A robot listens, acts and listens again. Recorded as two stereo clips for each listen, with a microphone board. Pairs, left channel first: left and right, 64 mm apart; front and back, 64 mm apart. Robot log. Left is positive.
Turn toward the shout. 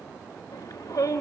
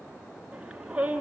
note: The shout: 105° left.
cmd yaw +105
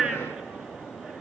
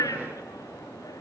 note: The shout is now 10° right.
cmd yaw -10
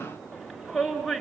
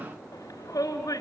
end: Found it: a shout, straight ahead, over 4 m away.